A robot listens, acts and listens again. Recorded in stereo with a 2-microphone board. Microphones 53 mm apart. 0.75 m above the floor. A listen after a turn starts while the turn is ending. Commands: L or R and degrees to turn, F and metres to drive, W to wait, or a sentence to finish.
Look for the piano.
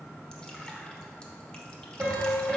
R45
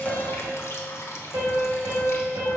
R90
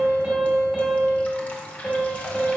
Facing the piano, 2 to 4 m away.